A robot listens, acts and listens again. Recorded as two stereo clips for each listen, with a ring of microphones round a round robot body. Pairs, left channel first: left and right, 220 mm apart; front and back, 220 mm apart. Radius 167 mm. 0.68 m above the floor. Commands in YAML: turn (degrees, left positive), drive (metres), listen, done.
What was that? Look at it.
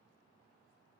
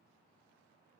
listen: true
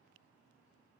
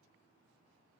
listen: true
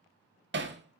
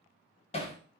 turn: -65
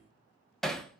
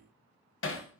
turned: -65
done: "Facing the hammering."